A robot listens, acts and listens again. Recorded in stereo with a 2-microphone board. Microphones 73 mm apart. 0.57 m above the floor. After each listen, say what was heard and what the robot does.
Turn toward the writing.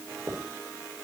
The writing: about 35° right or 145° right. Turn 35° right.
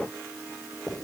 Facing the writing.